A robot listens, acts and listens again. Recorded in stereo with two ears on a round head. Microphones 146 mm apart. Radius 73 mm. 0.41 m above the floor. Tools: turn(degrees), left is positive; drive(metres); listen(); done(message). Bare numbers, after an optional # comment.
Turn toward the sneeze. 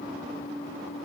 listen()
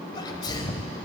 # The sneeze: about 30° left or 150° left.
turn(30)
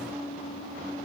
listen()
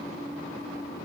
done("I heard a sneeze, but can't make it out now. It was about straight ahead or 120° left.")